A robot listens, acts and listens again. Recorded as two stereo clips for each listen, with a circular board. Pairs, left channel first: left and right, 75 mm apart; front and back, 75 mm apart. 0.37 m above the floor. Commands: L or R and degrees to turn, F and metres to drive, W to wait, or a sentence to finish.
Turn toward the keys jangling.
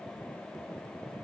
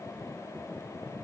W
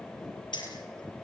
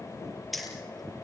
L90
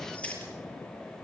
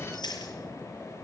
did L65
L15
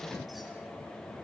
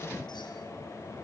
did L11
W
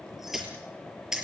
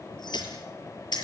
R10
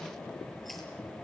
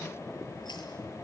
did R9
W
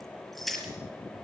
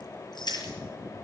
Found it: keys jangling, straight ahead, over 4 m away.